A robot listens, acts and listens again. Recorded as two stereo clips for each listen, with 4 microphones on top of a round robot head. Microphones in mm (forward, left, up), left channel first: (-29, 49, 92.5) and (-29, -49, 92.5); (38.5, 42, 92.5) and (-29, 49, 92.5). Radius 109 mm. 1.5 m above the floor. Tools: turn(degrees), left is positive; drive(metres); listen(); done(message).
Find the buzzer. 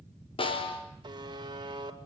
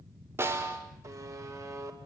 turn(degrees=-135)
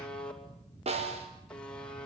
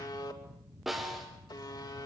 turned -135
turn(degrees=10)
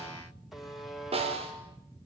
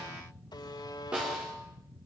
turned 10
done("Facing the buzzer, 2 to 4 m away.")